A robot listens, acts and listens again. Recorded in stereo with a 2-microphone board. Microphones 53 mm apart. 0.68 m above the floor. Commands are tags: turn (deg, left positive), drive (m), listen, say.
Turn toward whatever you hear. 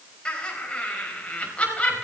<turn deg="25"/>
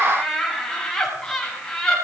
<turn deg="30"/>
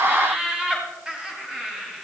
<turn deg="-15"/>
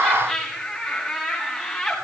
<say>Facing the laughter, over 4 m away.</say>